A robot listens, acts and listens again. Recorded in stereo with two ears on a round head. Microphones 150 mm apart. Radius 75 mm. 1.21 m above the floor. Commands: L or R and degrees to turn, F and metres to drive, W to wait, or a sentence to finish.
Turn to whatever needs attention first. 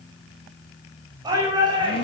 R25
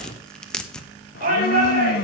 R130
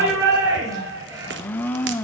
R20
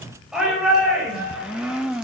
Found it: a shout, straight ahead.